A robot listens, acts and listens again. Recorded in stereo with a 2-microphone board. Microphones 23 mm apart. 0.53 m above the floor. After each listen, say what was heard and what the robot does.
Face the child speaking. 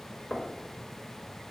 Keep listening.
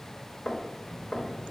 Turn 30° left.
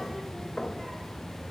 Turn 30° left.
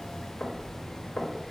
So it is at 150° left. Turn 150° left.
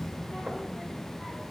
The child speaking is now 10° right. Turn 10° right.
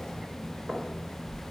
Facing the child speaking.